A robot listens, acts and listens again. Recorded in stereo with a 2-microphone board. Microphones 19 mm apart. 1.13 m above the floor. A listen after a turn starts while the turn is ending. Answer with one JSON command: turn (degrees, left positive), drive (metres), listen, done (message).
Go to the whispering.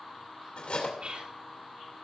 {"turn": -70}
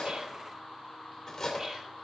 {"listen": true}
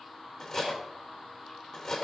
{"listen": true}
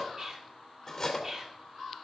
{"turn": -35}
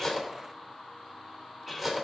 {"listen": true}
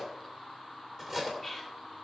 {"drive": 1.0}
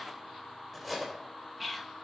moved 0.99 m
{"drive": 1.0}
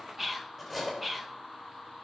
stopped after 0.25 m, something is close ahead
{"turn": -10}
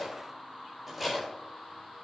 {"listen": true}
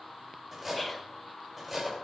{"done": "Arrived at the whispering, straight ahead."}